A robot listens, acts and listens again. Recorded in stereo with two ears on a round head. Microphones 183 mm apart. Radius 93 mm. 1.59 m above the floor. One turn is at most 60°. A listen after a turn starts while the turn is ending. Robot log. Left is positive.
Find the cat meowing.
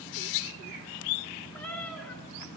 cmd yaw +30
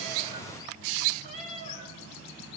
note: So it is at 35° right.
cmd yaw -35
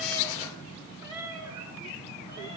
note: The cat meowing is now 20° right.
cmd yaw -20
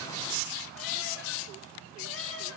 cmd idle
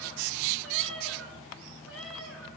end: Found it: a cat meowing, straight ahead, over 4 m away.